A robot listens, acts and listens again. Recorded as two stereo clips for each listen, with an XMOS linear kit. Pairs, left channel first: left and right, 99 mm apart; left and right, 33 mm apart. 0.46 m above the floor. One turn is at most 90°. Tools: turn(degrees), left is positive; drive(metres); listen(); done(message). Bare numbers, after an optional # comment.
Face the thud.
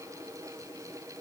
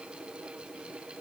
listen()
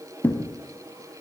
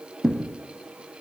# The thud: about 15° left or 165° left.
turn(15)
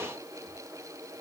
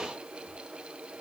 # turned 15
listen()
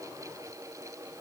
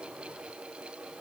done("I heard a thud, but can't make it out now. It was about straight ahead or 150° left.")